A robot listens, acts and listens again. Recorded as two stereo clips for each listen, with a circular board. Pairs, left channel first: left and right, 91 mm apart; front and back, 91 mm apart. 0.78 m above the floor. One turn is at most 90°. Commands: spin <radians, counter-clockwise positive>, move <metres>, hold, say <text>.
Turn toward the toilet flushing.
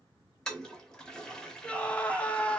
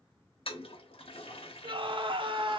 say Found it: a toilet flushing, straight ahead, under 1 m away.